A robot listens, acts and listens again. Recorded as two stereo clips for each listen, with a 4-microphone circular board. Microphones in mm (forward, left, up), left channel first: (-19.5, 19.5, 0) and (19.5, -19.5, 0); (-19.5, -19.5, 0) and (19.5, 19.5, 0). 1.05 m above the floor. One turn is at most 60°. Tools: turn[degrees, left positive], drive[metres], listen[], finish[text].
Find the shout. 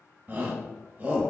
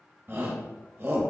Thought: The shout: 10° left.
Action: turn[10]
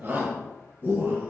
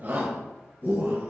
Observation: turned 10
Action: finish[Facing the shout, 1 to 2 m away.]